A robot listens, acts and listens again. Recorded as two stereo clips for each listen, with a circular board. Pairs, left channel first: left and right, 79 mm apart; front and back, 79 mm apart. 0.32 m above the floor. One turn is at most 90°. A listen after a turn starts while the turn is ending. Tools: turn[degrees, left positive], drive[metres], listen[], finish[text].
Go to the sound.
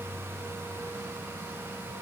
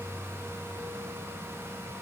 Action: listen[]
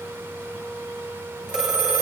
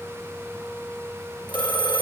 Thought: The phone ringing: 10° right.
Action: turn[-10]
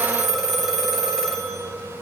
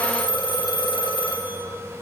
Action: drive[1.0]
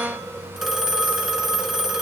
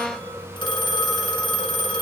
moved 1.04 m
Action: drive[1.0]
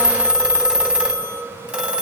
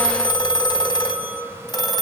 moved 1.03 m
Thought: The phone ringing is now 15° right.
Action: turn[-15]
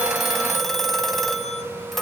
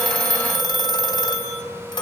Action: drive[1.0]
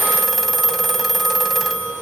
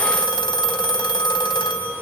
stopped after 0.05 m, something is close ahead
Action: finish[I am next to the phone ringing.]